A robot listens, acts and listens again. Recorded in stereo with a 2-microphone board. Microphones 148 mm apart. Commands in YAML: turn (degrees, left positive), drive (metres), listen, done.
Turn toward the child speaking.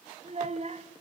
turn: -50
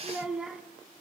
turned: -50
done: "Facing the child speaking, 2 to 4 m away."